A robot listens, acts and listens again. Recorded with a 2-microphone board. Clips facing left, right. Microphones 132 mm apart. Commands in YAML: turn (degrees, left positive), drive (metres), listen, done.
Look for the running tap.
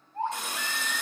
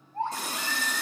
turn: -35
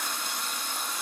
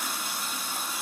done: "Facing the running tap, under 1 m away."